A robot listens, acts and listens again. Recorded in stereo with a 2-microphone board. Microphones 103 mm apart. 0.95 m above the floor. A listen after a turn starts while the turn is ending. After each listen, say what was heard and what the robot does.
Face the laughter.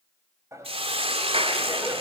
The laughter: about 30° right or 150° right. Turn 30° right.
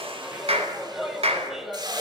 Facing the laughter.